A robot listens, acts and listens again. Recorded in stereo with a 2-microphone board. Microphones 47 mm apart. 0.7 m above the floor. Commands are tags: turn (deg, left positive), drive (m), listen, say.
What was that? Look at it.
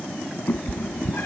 <turn deg="45"/>
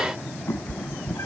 <turn deg="85"/>
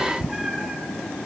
<turn deg="-10"/>
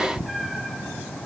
<say>Found it: a cat meowing, straight ahead.</say>